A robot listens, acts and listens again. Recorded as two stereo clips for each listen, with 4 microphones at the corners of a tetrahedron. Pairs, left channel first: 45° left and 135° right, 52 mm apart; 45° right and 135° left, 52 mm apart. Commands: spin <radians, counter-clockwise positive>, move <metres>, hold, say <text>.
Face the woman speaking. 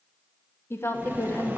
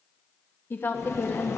spin 0.17
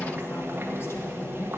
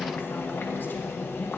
hold
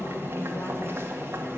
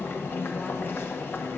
hold
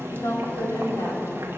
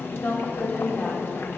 spin 0.35
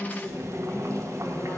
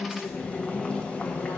say Found it: a woman speaking, straight ahead.